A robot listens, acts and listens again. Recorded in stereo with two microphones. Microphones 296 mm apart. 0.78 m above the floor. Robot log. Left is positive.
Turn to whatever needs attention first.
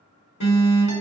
cmd yaw +90
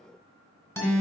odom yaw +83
end: Found it: an alarm, straight ahead, 1 to 2 m away.